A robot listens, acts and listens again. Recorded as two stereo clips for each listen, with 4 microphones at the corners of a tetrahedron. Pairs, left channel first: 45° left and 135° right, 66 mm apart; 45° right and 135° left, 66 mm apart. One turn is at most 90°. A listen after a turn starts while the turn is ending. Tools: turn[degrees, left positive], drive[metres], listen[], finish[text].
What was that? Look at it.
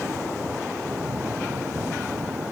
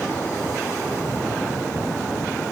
Action: listen[]
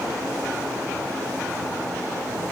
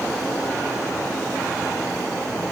Action: listen[]
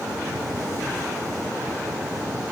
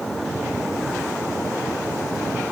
Action: finish[I can't make out anything.]